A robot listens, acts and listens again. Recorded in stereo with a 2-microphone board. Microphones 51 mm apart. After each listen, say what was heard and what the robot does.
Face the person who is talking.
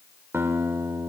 Keep listening.
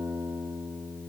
Keep listening.
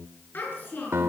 The child speaking: about 40° left or 140° left. Turn 40° left.
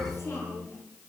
So it is at 105° left. Turn 105° left.
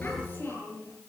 The child speaking is now 40° left. Turn 40° left.
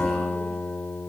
Keep listening.
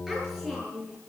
The child speaking is now 10° right. Turn 10° right.
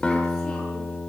Keep listening.
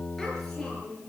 Found it: a child speaking, straight ahead.